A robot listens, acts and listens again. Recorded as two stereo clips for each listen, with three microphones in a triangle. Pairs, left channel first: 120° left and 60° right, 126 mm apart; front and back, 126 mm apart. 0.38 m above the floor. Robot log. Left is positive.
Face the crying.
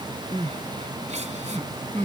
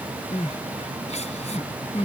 note: The crying: 30° right.
cmd yaw -30
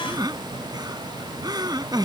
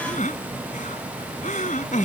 end: Facing the crying.